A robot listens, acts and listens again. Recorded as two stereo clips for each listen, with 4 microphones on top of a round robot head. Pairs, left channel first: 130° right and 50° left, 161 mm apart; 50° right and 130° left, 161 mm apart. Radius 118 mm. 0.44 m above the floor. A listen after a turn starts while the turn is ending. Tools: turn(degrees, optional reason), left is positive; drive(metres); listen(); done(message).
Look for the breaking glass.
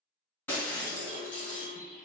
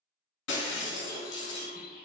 turn(degrees=-50, reason="The breaking glass: 50° right.")
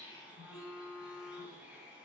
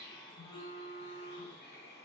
done("I heard breaking glass from this way, but can't make it out now.")